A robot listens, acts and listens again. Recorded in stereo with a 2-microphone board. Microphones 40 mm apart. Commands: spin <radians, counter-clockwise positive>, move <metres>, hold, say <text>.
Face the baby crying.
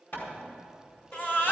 spin 1.05
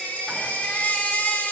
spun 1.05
spin 0.96
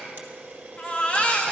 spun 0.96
spin 0.61
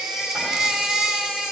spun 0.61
spin -0.17
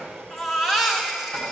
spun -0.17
say Found it: a baby crying, straight ahead.